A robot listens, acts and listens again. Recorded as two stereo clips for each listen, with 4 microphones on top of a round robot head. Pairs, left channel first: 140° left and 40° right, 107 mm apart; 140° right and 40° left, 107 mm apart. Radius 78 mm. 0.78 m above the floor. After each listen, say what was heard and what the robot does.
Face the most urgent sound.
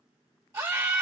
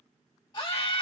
The scream: 95° right. Turn 95° right.
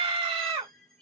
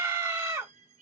The scream is now 10° right. Turn 10° right.
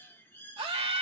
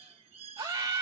Found it: a scream, straight ahead, 1 to 2 m away.